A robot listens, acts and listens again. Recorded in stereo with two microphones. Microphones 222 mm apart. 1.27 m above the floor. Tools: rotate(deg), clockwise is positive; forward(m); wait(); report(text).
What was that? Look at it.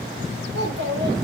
rotate(55)
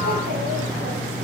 wait()
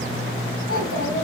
rotate(80)
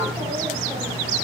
wait()
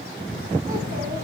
wait()
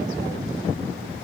report("Facing where the child speaking came from. I can't hear it now.")